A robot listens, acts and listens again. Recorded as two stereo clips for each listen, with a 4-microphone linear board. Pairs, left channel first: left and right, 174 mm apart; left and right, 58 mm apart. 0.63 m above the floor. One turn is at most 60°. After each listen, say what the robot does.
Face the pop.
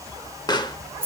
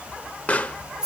Turn 25° left.
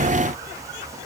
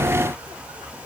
Keep listening.
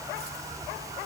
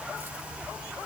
I heard a pop, but can't make it out now. It was about straight ahead or 130° left.